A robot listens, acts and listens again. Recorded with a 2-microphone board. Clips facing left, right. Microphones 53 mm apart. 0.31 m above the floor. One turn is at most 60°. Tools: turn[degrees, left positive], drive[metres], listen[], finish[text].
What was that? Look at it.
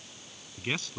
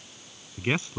Thought: The man speaking: about 20° right or 160° right.
Action: turn[-20]
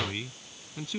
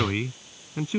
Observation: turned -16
Thought: The man speaking: about 30° right or 150° right.
Action: turn[-30]
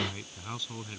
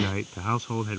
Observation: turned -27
Thought: So it is at 135° right.
Action: turn[-60]
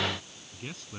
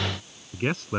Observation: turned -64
Thought: The man speaking is now 65° right.
Action: turn[-60]
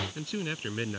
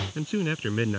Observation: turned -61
Thought: The man speaking is now 25° right.
Action: turn[-25]
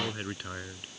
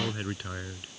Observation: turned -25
Action: finish[Found it: a man speaking, straight ahead.]